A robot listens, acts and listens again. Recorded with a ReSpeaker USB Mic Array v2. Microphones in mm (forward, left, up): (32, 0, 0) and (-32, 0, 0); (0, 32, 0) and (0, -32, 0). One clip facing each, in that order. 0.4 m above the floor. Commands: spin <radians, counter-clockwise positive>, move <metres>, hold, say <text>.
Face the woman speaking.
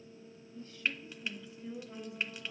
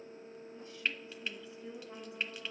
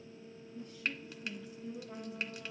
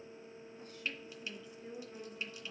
spin -1.83
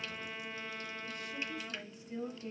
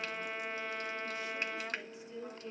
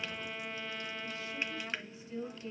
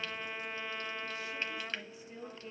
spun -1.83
spin -0.26
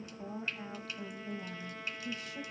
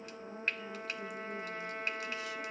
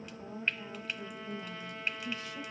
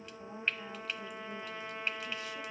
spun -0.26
say Found it: a woman speaking, straight ahead, 2 to 4 m away.